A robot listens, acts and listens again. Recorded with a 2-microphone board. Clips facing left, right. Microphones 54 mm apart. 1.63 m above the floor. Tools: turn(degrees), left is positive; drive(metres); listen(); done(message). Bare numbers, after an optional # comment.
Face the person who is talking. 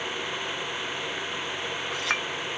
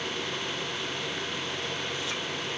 listen()
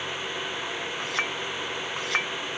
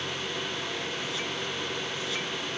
listen()
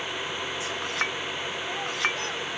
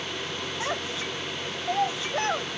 # The child speaking: about 40° right or 140° right.
turn(-40)
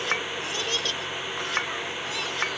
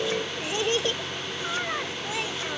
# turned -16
# So it is at 25° right.
turn(-25)
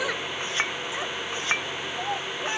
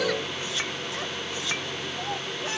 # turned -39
# The child speaking is now 15° left.
turn(15)
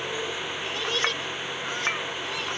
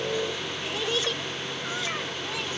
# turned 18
done("Facing the child speaking.")